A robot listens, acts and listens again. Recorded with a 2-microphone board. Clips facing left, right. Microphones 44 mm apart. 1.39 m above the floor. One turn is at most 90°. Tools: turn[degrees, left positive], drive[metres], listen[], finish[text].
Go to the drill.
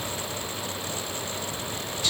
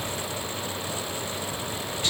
Action: listen[]
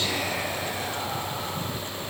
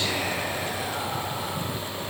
Action: listen[]
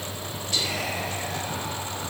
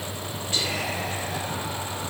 Action: finish[I can't make out a drill, only whispering.]